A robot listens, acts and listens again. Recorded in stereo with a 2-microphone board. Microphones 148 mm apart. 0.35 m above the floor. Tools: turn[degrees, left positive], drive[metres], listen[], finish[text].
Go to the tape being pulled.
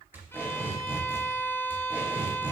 Action: turn[-30]
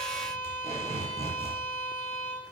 Thought: So it is at 135° right.
Action: turn[-135]
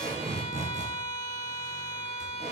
Thought: The tape being pulled is now 50° right.
Action: turn[-50]
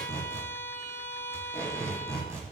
Thought: The tape being pulled is now 15° right.
Action: turn[-15]
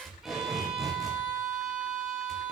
Action: drive[1.0]
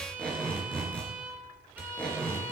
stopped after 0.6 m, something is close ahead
Thought: The tape being pulled is now 10° left.
Action: turn[10]
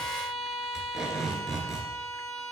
Action: finish[Something is in my way. I am facing the tape being pulled but have not reached it.]